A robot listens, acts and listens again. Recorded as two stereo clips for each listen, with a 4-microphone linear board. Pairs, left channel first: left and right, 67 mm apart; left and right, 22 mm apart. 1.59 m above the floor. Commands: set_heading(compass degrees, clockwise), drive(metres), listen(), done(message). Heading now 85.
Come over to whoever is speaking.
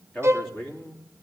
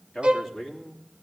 set_heading(55)
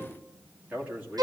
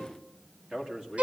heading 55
set_heading(75)
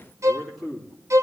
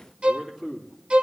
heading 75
drive(1.0)
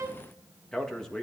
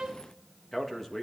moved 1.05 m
set_heading(65)
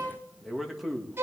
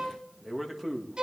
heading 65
drive(1.0)
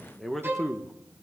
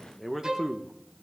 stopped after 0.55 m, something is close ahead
done("I am next to the man speaking.")